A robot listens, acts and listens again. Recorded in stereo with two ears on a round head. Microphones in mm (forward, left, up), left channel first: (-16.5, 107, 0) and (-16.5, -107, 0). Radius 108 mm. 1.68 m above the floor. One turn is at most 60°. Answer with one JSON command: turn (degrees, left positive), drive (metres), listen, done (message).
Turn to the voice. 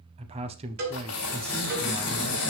{"turn": -25}
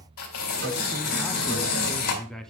{"done": "Facing the man speaking, under 1 m away."}